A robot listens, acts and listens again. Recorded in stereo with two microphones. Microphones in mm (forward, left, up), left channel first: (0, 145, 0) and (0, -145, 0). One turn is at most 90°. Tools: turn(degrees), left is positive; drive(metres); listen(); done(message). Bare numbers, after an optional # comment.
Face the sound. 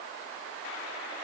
listen()
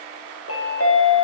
# The chime: about 50° left or 130° left.
turn(50)
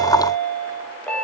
done("Facing the chime, 1 to 2 m away.")